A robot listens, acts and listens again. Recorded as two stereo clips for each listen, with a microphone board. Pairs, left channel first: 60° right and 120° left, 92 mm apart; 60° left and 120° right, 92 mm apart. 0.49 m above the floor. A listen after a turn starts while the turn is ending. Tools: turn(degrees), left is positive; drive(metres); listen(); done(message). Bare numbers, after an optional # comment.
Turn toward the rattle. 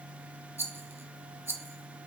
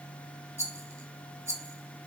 # The rattle: straight behind.
turn(180)
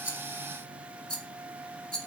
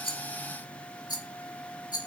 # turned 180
# The rattle is now 20° left.
turn(20)
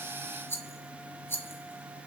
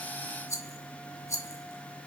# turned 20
done("Facing the rattle.")